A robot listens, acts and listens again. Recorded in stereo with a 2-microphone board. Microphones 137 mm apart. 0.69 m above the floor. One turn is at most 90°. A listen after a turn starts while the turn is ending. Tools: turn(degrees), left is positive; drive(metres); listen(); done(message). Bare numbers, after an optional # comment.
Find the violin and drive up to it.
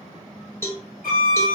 turn(90)
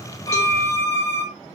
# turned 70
# So it is at 10° left.
turn(10)
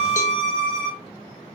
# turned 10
drive(1.0)
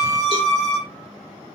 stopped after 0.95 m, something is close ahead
# The violin is now 15° left.
turn(15)
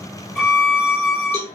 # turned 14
done("Arrived at the violin, straight ahead.")